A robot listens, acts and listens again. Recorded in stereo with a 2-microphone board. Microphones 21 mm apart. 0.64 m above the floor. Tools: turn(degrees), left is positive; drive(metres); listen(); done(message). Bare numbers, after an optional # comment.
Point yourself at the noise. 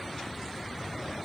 listen()
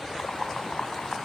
# The boiling: about 65° left or 115° left.
turn(65)
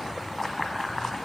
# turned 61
done("Facing the boiling.")